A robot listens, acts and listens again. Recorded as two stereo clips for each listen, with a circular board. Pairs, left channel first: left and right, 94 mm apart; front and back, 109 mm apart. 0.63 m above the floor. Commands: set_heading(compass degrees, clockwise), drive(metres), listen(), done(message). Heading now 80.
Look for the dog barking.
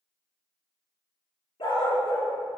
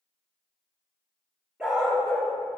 set_heading(345)
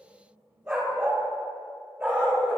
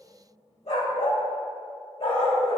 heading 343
set_heading(358)
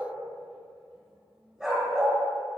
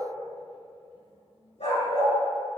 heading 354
done("Found it: a dog barking, straight ahead.")